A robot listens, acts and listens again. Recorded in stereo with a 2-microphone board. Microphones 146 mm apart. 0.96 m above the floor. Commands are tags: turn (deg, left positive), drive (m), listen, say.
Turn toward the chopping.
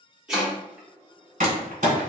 <turn deg="-30"/>
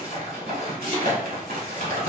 <turn deg="-145"/>
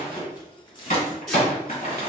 <listen/>
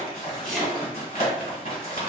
<say>Facing the chopping.</say>